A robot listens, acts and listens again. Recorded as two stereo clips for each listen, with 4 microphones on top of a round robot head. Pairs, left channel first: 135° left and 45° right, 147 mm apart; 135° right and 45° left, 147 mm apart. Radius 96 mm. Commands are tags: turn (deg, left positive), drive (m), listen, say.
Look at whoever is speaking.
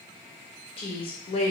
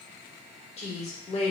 <turn deg="-175"/>
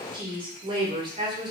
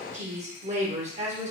<turn deg="10"/>
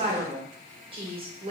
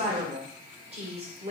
<say>Found it: a woman speaking, straight ahead.</say>